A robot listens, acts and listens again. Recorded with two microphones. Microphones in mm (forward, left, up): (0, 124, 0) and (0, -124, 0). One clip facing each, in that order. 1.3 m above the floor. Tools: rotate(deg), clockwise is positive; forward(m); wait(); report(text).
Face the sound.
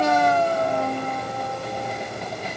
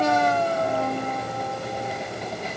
wait()
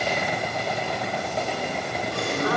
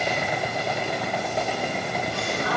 rotate(-65)
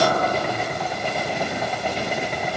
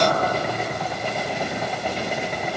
wait()
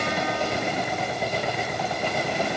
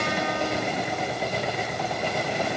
report("I heard a gasp, but can't make it out now. It was about straight ahead or 50° left.")